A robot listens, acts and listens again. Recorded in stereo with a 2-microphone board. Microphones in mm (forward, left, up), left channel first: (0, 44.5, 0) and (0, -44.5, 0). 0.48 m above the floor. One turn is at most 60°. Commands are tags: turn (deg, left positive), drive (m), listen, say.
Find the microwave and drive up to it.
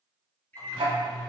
<turn deg="20"/>
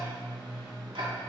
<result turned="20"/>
<drive m="1.0"/>
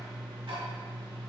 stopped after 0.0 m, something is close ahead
<listen/>
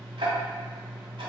<listen/>
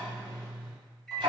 <say>Something is in my way. I am facing the microwave but have not reached it.</say>